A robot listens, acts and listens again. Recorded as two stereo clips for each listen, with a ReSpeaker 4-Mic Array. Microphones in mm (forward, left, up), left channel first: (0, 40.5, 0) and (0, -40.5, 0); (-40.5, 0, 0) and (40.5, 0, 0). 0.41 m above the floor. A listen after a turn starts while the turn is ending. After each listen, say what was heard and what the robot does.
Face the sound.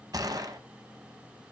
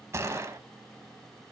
The gunshot: 55° right. Turn 55° right.
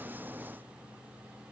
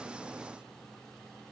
Facing where the gunshot came from. I can't hear it now.